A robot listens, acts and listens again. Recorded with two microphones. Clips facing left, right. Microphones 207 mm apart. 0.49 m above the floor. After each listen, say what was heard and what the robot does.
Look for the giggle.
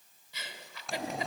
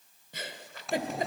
The giggle: about 50° right or 130° right. Turn 50° right.
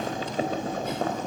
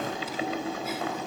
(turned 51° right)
Keep listening.
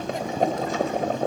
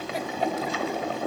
Keep listening.
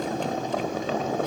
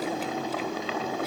I heard a giggle, but can't make it out now. It was about 5° left or 80° right.